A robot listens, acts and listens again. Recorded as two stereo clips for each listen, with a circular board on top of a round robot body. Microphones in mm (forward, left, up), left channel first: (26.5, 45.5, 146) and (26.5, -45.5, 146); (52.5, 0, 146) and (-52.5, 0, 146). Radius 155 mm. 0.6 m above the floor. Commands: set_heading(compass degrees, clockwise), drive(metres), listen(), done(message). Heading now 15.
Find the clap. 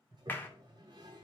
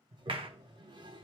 set_heading(220)
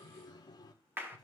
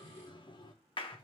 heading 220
set_heading(245)
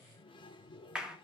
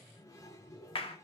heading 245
set_heading(255)
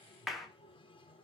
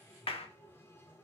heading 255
done("Facing the clap, 1 to 2 m away.")